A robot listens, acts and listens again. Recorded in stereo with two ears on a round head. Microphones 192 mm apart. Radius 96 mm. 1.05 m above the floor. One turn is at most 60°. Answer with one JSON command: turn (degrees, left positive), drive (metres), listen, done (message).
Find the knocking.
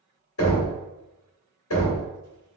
{"turn": 60}
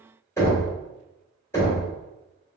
{"turn": 15}
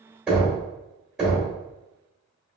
{"done": "Found it: knocking, straight ahead, 1 to 2 m away."}